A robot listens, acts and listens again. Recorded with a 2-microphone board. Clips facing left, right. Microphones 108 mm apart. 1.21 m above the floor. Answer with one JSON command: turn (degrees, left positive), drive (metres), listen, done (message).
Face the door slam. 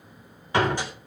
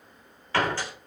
{"turn": 15}
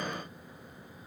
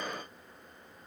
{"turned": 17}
{"listen": true}
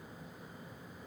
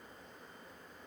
{"done": "I heard a door slam, but can't make it out now. It was about straight ahead or 145° left."}